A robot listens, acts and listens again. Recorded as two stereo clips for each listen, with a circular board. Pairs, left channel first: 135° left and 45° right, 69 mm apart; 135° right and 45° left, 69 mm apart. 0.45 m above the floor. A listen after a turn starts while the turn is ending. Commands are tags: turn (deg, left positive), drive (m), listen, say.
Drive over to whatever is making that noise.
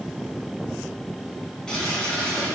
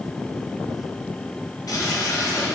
<turn deg="-150"/>
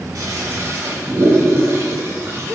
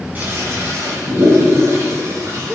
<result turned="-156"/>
<drive m="1.0"/>
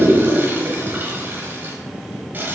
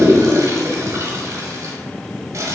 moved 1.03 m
<turn deg="15"/>
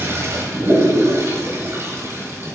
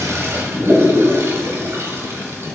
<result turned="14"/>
<drive m="1.0"/>
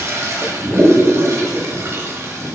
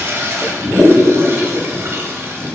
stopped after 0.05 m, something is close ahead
<say>I am next to the toilet flushing.</say>